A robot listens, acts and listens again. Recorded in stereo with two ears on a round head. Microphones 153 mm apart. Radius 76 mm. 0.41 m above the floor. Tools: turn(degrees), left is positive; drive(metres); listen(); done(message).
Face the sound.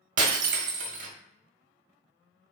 turn(degrees=-50)
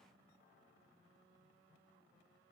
listen()
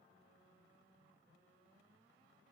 done("I heard breaking glass, but can't make it out now. It was about straight ahead or 80° right.")